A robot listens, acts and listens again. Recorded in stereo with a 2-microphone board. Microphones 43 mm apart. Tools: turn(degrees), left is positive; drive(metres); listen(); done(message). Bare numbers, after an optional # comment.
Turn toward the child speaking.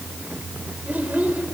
# The child speaking: about 40° right or 140° right.
turn(-40)
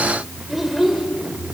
done("Found it: a child speaking, straight ahead, 2 to 4 m away.")